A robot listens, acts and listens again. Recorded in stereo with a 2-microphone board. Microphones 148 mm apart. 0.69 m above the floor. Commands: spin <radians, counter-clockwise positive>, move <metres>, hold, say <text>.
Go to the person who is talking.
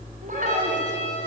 spin -1.05
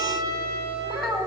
move 1.0
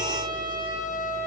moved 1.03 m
hold
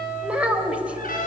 spin -0.17
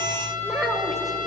move 1.0
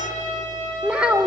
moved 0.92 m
move 1.0
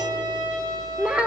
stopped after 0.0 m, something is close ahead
spin -0.17
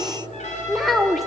say Arrived at the child speaking, straight ahead.